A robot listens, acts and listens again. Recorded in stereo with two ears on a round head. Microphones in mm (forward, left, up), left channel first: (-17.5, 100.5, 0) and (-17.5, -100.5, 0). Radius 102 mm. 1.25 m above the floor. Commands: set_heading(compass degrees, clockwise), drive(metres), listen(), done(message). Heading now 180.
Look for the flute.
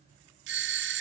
listen()
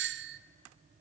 listen()
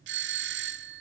done("I can't make out a flute, only a doorbell.")